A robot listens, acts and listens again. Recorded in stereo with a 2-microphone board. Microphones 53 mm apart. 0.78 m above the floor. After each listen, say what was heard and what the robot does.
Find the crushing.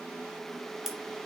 Turn 30° right.
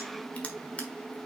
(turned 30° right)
Keep listening.
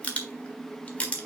So it is at 25° left. Turn 25° left.
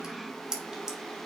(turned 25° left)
The crushing is now 10° right. Turn 10° right.
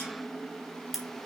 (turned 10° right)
Found it: crushing, straight ahead, 1 to 2 m away.